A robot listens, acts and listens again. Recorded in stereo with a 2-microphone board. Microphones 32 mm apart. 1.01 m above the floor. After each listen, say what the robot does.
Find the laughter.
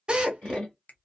Turn 45° left.
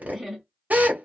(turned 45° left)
Facing the laughter, 1 to 2 m away.